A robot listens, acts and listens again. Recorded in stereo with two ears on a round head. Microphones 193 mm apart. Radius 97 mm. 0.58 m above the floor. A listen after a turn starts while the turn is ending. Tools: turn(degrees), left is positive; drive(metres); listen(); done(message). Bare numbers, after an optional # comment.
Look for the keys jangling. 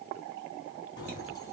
# The keys jangling: about 20° left or 160° left.
turn(20)
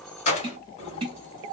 # The keys jangling: about 30° left or 150° left.
turn(30)
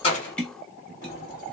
listen()
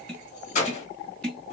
# So it is at 145° left.
turn(145)
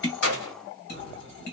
# The keys jangling is now 60° left.
turn(60)
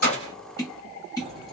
listen()
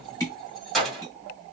done("Found it: keys jangling, straight ahead.")